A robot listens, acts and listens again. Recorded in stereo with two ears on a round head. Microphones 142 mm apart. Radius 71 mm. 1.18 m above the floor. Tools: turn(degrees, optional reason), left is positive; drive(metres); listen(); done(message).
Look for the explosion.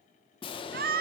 turn(degrees=35, reason="The explosion: about 35° left or 145° left.")
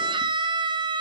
listen()
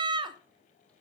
done("I heard an explosion, but can't make it out now. It was about straight ahead or 110° left.")